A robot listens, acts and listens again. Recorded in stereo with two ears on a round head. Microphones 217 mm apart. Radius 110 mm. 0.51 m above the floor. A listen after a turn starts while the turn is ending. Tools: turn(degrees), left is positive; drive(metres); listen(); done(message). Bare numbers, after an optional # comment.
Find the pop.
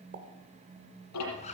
# The pop: about 40° right or 140° right.
turn(-40)
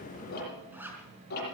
listen()
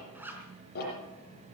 done("I heard a pop, but can't make it out now. It was about straight ahead or 100° right.")